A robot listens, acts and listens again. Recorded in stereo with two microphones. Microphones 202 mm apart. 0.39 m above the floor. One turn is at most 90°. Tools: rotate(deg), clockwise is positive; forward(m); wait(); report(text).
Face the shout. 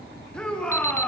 rotate(-30)
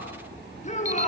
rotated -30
rotate(-90)
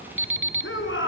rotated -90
rotate(-75)
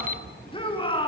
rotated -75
rotate(-25)
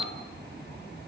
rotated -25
wait()
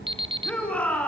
report("Found it: a shout, straight ahead.")